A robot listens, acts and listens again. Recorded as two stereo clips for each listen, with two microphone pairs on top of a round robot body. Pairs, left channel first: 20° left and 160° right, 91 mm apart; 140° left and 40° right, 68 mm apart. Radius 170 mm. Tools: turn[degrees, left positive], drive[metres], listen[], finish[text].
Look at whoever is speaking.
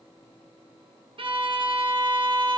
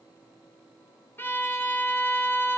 Action: listen[]
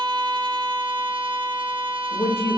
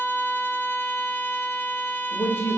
Thought: The woman speaking: 85° left.
Action: turn[85]
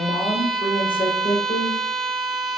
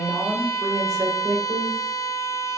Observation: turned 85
Action: finish[Facing the woman speaking, 2 to 4 m away.]